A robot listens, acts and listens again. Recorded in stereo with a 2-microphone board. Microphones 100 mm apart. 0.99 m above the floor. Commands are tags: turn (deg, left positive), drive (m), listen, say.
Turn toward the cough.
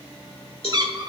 <listen/>
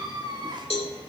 <listen/>
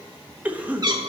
<turn deg="-30"/>
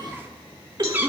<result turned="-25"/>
<turn deg="-140"/>
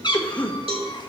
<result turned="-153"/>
<turn deg="15"/>
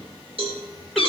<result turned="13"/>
<listen/>
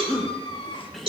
<say>Facing the cough, under 1 m away.</say>